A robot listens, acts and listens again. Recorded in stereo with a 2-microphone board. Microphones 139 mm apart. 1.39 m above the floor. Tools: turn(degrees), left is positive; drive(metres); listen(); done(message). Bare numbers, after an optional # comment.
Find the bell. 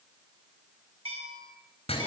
# The bell: about 45° right or 135° right.
turn(-45)
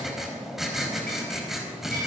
listen()
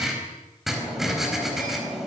listen()
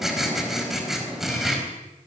done("I heard a bell, but can't make it out now. It was about straight ahead or 90° right.")